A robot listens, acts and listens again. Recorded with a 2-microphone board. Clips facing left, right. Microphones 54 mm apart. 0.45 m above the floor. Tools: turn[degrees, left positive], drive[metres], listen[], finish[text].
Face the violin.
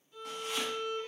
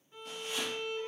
Thought: The violin: about 25° right or 155° right.
Action: turn[-25]
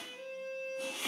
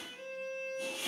Thought: So it is at 135° right.
Action: turn[-135]
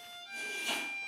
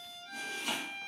Action: finish[Found it: a violin, straight ahead.]